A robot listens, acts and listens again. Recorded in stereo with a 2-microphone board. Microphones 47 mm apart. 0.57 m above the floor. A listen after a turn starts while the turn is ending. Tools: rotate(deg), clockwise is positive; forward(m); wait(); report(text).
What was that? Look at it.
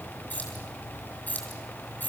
rotate(-45)
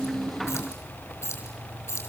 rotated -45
rotate(-100)
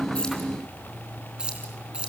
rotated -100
rotate(25)
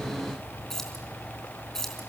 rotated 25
rotate(-10)
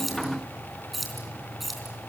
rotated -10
report("Facing the keys jangling, 2 to 4 m away.")